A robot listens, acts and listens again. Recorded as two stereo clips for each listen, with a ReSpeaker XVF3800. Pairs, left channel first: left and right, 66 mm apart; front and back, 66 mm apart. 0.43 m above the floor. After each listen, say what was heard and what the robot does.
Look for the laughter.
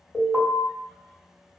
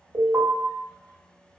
Keep listening.
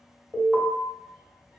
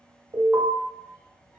Keep listening.
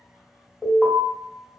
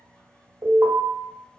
I can't make out laughter to turn to.